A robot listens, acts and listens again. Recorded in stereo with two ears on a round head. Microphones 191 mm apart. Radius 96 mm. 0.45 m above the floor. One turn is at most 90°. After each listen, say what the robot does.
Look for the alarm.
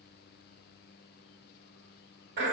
Keep listening.
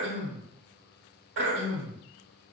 Keep listening.
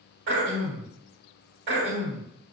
I can't make out an alarm, only throat clearing.